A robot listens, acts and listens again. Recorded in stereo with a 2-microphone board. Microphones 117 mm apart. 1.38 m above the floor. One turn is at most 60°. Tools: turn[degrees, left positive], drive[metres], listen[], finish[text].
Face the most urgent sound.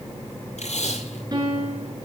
Action: listen[]
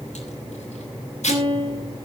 Action: listen[]
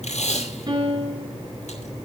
Action: finish[I can't make out anything urgent to turn to.]